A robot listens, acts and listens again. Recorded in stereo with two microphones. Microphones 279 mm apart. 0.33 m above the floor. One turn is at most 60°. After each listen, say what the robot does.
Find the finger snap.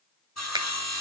Turn 30° right.
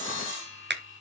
Turn 60° right.
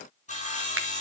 Turn 60° right.
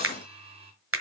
Turn 60° right.
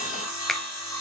Found it: a finger snap, straight ahead, 1 to 2 m away.